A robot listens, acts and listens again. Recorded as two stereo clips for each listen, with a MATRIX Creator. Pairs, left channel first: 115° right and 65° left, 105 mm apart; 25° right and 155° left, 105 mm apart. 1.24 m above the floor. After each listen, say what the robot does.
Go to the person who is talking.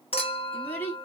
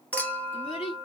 Turn 40° right.
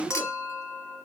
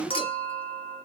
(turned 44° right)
Drive 1.0 m forward.
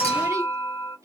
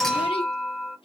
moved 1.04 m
Keep listening.
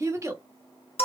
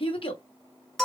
Drive 1.0 m forward.
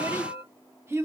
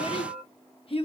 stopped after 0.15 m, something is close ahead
I am next to the child speaking.